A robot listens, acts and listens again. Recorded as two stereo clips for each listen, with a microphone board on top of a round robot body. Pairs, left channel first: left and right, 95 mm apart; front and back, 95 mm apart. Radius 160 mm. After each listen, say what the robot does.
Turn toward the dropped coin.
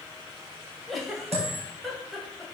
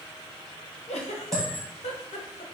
Turn 85° right.
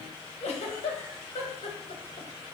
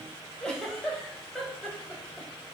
I heard a dropped coin from this way, but can't make it out now.